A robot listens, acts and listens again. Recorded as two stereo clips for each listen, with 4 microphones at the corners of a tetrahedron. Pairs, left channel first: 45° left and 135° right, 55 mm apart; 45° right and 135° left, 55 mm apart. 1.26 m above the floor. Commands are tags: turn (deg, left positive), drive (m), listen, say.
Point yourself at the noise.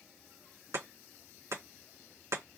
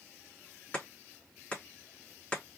<turn deg="-115"/>
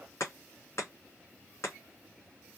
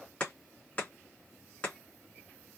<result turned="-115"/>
<turn deg="15"/>
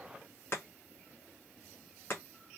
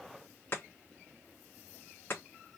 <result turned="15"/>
<say>Facing the chopping.</say>